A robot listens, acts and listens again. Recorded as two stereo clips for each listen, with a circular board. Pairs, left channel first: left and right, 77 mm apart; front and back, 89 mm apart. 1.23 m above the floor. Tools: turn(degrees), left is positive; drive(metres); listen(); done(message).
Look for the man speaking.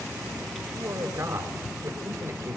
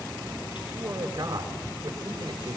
turn(degrees=-135)
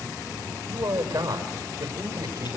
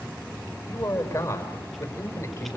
turn(degrees=-55)
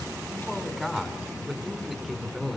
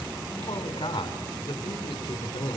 done("Found it: a man speaking, straight ahead.")